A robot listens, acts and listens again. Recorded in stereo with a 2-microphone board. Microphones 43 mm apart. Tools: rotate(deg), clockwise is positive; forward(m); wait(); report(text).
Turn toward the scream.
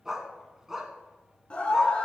rotate(-25)
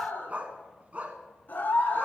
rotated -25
rotate(-125)
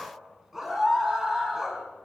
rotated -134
report("Facing the scream, 2 to 4 m away.")